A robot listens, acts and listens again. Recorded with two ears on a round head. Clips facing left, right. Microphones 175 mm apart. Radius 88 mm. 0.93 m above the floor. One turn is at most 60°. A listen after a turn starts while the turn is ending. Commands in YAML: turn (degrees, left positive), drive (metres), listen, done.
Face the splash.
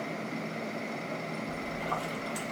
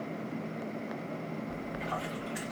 turn: 55
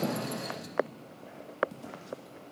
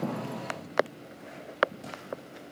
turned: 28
listen: true
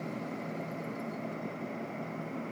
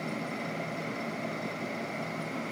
done: "I heard a splash, but can't make it out now. It was about 25° left or 95° left."